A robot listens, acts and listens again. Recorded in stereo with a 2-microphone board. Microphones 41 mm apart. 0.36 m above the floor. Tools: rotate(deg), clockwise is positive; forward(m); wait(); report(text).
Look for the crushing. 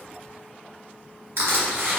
rotate(90)
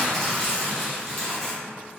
rotate(-10)
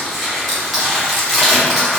report("Found it: crushing, straight ahead, 1 to 2 m away.")